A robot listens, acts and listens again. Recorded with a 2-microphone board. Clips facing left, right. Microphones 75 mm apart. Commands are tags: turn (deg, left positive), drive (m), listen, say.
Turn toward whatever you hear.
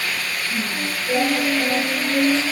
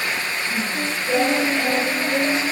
<turn deg="-35"/>
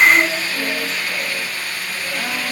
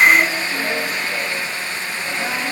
<listen/>
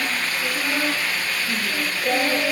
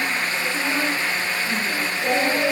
<turn deg="-20"/>
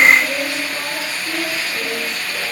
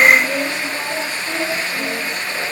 <say>Facing the singing, over 4 m away.</say>